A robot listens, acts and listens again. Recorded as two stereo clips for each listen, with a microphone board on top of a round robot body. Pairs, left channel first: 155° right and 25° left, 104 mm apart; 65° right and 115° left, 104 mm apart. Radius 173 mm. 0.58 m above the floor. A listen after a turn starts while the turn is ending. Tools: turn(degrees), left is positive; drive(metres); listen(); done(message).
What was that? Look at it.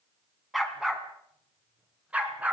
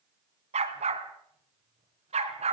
turn(degrees=100)
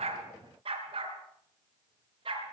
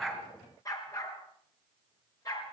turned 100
turn(degrees=-15)
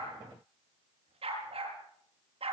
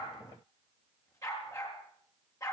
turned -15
done("Found it: a dog barking, straight ahead.")